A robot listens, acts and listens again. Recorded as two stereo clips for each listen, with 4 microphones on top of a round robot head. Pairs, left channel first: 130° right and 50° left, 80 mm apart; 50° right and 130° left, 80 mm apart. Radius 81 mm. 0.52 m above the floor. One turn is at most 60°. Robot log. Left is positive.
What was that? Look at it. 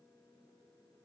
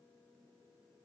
cmd idle
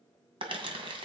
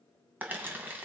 note: The crumpling: 65° left.
cmd yaw +60
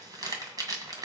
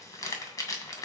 end: Facing the crumpling.